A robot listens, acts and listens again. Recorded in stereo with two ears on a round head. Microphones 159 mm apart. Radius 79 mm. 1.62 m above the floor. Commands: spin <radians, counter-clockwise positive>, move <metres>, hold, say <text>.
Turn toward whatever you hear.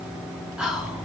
spin -0.52
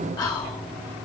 spin 0.44
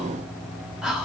say Facing the whispering, 1 to 2 m away.